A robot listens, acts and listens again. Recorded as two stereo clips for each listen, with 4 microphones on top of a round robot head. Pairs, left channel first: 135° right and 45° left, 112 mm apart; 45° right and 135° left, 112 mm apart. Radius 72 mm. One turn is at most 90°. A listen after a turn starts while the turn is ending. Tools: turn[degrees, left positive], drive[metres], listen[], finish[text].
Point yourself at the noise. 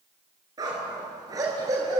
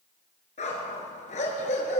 Thought: The dog barking: 15° right.
Action: turn[-15]
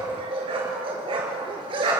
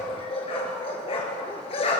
Action: finish[Facing the dog barking, over 4 m away.]